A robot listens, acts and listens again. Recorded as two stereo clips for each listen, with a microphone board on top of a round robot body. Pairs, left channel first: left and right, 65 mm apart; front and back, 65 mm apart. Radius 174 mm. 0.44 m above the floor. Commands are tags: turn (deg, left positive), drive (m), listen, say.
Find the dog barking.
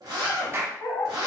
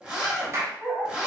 <turn deg="110"/>
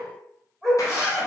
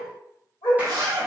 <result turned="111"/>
<say>Found it: a dog barking, straight ahead, 1 to 2 m away.</say>